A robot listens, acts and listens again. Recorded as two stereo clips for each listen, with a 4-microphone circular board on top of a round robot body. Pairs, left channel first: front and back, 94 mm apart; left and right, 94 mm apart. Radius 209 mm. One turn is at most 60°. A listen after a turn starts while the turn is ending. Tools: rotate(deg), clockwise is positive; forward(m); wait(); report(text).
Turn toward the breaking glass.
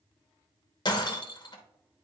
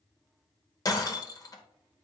rotate(-40)
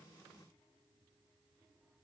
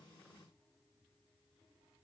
report("I heard breaking glass from this way, but can't make it out now.")